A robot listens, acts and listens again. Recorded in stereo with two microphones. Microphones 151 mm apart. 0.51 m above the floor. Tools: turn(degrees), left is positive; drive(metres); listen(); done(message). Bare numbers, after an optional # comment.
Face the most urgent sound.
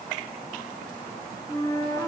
listen()
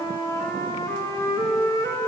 listen()
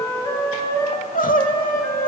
# The crying: about 60° left or 120° left.
turn(60)
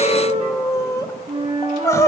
# So it is at 20° left.
turn(20)
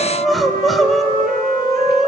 done("Found it: crying, straight ahead, 1 to 2 m away.")